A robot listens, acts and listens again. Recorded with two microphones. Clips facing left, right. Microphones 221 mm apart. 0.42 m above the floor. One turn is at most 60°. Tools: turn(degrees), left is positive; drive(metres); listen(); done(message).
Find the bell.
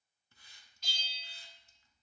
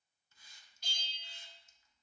turn(degrees=-55)
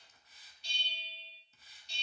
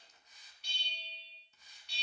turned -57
turn(degrees=-60)
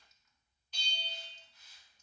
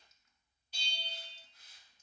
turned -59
turn(degrees=-10)
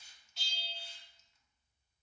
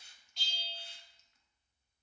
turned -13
done("Found it: a bell, straight ahead.")